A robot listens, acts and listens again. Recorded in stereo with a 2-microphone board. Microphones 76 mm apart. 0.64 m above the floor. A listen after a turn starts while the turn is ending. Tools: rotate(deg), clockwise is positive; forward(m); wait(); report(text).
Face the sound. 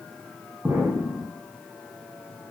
rotate(35)
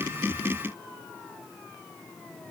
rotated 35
wait()
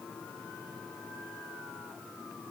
report("I heard an explosion, but can't make it out now. It was about straight ahead or 110° right.")